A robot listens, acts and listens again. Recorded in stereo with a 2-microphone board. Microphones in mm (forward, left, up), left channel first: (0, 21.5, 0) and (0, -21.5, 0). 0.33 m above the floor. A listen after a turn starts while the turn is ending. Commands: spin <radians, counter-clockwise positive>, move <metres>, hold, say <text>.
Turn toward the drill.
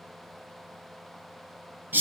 hold
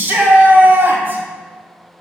hold
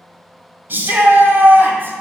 say I can't make out a drill, only a shout.